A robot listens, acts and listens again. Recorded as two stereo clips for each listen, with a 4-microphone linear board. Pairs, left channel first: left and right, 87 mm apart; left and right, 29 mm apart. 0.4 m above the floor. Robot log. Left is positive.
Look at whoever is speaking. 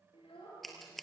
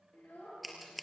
cmd yaw +90
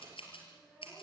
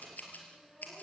cmd idle
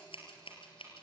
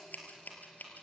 cmd idle
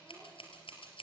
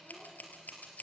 end: I heard a child speaking from this way, but can't make it out now.